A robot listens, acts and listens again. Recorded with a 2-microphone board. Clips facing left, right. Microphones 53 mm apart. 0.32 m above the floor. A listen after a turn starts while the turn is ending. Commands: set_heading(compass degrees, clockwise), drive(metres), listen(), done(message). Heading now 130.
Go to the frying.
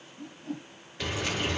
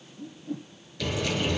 set_heading(100)
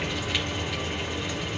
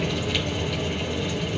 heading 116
set_heading(96)
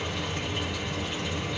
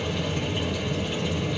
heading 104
set_heading(94)
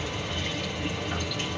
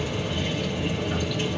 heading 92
drive(1.0)
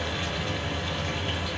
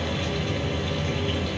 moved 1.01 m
drive(1.0)
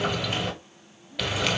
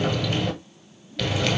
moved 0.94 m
set_heading(77)
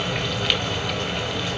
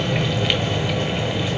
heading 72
drive(1.0)
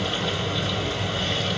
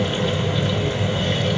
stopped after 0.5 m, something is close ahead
done("Arrived at the frying, straight ahead.")